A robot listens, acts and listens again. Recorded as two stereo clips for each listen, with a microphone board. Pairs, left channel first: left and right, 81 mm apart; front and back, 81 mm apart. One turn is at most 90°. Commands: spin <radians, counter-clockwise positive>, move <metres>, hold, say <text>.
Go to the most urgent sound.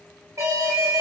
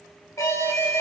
spin -0.79
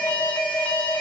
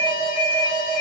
spin 0.35
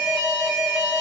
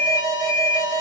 move 1.0
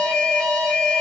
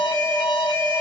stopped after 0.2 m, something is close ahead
say Blocked. The alarm is further on, straight ahead.